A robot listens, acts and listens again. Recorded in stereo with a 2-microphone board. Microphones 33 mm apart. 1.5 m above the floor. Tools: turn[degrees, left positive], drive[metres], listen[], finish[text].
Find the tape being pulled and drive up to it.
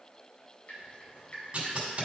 Thought: The tape being pulled: about 35° right or 145° right.
Action: turn[-35]
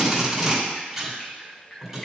Action: drive[1.0]
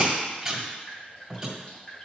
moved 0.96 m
Thought: The tape being pulled is now 15° right.
Action: turn[-15]
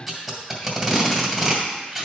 Action: drive[1.0]
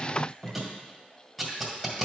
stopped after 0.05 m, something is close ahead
Action: finish[I am next to the tape being pulled.]